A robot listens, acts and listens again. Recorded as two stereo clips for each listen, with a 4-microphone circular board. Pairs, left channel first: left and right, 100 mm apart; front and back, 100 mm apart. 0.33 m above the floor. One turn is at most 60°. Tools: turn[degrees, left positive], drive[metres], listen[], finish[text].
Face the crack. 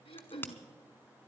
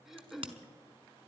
Thought: The crack: 160° left.
Action: turn[60]
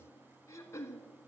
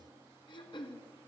Thought: Nothing new. It was at 100° left.
Action: turn[60]
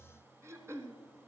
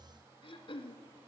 Thought: Nothing new. It was at 40° left.
Action: turn[40]
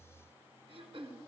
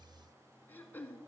Action: finish[I heard a crack from this way, but can't make it out now.]